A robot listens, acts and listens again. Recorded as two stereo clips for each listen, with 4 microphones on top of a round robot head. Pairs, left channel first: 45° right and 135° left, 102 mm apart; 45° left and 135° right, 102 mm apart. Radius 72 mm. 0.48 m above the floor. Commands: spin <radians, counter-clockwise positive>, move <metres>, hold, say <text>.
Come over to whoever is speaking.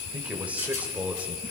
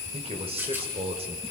spin -2.62
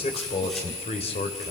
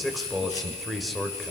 spin -0.79
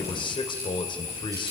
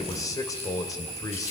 spin -0.17
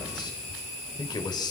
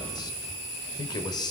move 1.0
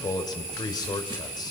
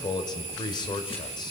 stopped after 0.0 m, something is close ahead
say Something is in my way. I am facing the man speaking but have not reached it.